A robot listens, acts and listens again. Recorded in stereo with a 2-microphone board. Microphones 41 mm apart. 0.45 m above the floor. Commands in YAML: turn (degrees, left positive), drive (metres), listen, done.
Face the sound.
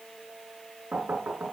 turn: -50
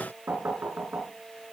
turn: -80
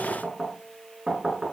done: "Found it: knocking, straight ahead, over 4 m away."